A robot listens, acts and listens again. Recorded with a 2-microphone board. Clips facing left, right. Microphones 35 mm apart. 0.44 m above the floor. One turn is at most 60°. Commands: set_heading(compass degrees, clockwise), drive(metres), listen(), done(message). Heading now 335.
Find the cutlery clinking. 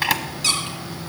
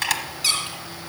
listen()
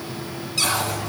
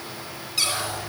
set_heading(275)
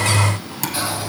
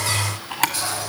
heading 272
set_heading(252)
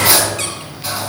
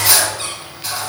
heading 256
done("Found it: cutlery clinking, straight ahead, 2 to 4 m away.")